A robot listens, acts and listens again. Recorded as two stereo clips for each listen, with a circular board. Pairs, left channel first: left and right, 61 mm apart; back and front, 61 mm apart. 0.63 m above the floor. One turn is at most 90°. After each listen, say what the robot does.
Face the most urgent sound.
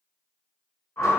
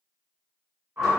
Keep listening.
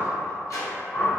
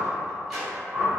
Keep listening.
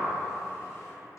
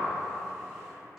I can't make out anything urgent, only a sliding door and a whoosh.